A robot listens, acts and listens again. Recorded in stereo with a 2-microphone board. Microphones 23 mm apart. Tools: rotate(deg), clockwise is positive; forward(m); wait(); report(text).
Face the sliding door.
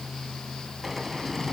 rotate(30)
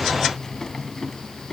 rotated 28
rotate(-25)
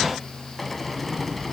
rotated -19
report("Facing the sliding door, 1 to 2 m away.")